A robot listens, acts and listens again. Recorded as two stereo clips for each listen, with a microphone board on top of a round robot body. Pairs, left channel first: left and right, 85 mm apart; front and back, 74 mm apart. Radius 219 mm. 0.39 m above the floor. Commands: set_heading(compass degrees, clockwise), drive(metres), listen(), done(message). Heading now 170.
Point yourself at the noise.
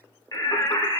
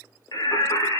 set_heading(125)
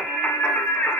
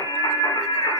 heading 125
set_heading(105)
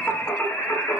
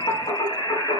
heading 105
set_heading(85)
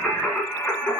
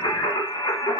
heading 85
set_heading(70)
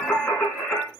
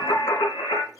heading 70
set_heading(55)
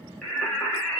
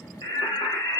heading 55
set_heading(40)
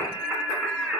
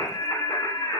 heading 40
done("Found it: singing, straight ahead.")